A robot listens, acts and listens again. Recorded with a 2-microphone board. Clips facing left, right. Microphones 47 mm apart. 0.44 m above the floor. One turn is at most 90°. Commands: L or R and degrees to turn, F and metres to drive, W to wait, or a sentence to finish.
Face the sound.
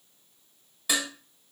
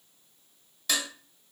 L30
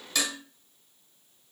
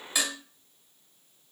R15
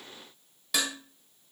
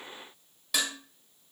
Found it: dishes clattering, straight ahead, 1 to 2 m away.